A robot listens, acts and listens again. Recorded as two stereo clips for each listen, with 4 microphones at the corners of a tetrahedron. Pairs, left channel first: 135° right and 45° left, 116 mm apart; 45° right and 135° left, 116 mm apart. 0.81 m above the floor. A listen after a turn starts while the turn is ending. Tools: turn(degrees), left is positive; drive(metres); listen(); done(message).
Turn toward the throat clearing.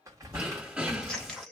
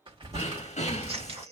turn(degrees=-35)
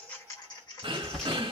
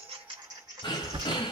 done("Facing the throat clearing.")